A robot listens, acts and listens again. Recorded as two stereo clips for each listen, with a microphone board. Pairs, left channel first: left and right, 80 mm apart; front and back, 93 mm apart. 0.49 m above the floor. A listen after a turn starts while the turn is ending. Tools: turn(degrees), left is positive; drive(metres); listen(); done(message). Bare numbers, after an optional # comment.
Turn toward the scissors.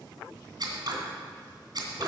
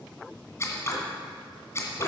# The scissors: 60° right.
turn(-60)
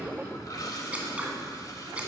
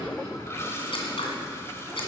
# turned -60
# The scissors is now 15° right.
turn(-15)
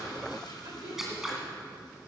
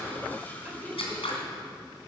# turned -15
done("Found it: scissors, straight ahead.")